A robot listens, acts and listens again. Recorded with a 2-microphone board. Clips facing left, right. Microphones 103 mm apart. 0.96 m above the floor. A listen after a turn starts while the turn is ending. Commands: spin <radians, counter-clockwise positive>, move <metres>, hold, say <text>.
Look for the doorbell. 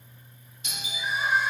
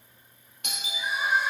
spin -1.13
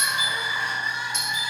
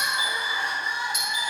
spin -0.17
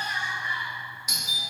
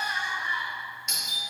say Facing the doorbell, 1 to 2 m away.